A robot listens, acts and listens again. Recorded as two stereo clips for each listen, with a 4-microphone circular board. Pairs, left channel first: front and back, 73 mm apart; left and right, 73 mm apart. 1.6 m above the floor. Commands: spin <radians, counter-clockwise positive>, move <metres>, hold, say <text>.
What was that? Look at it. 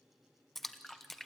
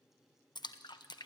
spin 1.48
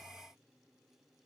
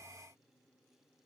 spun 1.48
say Facing where the splash came from. I can't hear it now.